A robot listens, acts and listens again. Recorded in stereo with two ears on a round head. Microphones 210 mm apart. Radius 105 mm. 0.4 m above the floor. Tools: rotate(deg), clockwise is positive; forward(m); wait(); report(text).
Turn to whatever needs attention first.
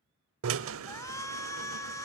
rotate(-30)
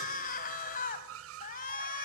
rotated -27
rotate(-140)
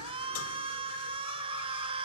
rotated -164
rotate(25)
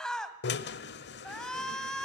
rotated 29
report("Found it: a shout, straight ahead, 2 to 4 m away.")